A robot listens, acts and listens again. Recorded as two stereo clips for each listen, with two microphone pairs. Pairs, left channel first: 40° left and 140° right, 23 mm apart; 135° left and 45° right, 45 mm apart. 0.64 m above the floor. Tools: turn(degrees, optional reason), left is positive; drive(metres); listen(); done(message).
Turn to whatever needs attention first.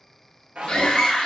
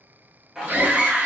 done("Facing the scream.")